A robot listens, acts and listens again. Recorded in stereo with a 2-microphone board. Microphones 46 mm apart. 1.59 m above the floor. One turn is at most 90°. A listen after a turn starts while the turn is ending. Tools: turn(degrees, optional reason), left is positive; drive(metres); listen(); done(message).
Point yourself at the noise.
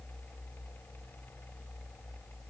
listen()
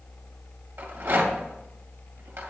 turn(degrees=-55, reason="The rattle: about 55° right or 125° right.")
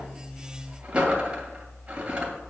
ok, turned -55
turn(degrees=-25, reason="So it is at 25° right.")
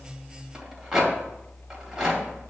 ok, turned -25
done("Facing the rattle, 2 to 4 m away.")